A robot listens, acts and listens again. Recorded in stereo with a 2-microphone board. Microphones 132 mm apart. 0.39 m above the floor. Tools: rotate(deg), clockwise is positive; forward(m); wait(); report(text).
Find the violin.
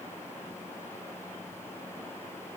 wait()
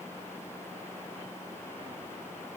wait()
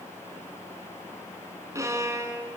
rotate(20)
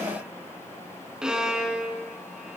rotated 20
report("Facing the violin.")